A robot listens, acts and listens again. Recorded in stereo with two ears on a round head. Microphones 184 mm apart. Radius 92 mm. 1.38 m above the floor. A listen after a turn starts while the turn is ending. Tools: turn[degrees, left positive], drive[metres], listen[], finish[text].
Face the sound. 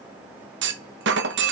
Thought: The clunk: about 60° right or 120° right.
Action: turn[-60]
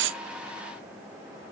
Action: listen[]
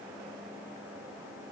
Action: finish[I heard a clunk, but can't make it out now. It was about straight ahead or 60° right.]